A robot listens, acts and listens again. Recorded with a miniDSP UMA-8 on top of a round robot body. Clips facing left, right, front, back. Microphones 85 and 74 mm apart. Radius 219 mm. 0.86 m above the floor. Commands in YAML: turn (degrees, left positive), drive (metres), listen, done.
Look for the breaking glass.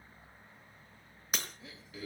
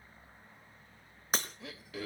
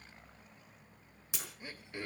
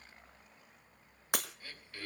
turn: -145
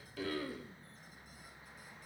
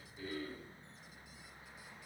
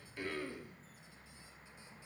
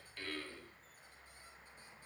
done: "I heard breaking glass from this way, but can't make it out now."